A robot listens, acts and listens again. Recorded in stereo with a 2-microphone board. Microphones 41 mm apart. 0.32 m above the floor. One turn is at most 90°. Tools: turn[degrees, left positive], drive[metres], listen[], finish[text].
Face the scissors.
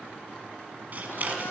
Thought: The scissors: about 40° right or 140° right.
Action: turn[-40]
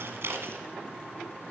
Thought: So it is at 100° right.
Action: turn[-90]
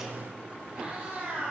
Thought: Nothing new. It was at 10° right.
Action: turn[-10]
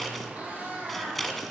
Action: finish[Facing the scissors.]